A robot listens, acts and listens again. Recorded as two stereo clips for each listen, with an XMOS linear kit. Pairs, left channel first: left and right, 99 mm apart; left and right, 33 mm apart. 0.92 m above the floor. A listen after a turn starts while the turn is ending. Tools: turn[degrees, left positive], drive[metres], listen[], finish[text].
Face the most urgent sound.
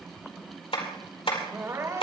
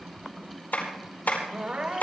Thought: The crying: about 35° right or 145° right.
Action: turn[-35]
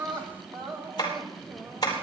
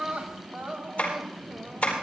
Thought: So it is at 110° right.
Action: turn[-110]
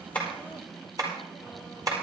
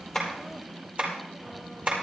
Action: listen[]
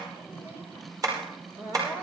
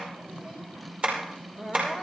Thought: The crying is now 25° right.
Action: turn[-25]
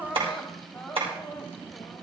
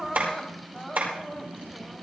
Action: finish[Facing the crying, 2 to 4 m away.]